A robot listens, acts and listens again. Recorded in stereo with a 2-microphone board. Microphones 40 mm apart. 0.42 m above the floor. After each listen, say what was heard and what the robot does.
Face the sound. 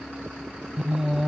Turn 30° right.
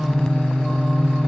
So it is at 15° left. Turn 15° left.
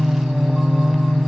Facing the singing.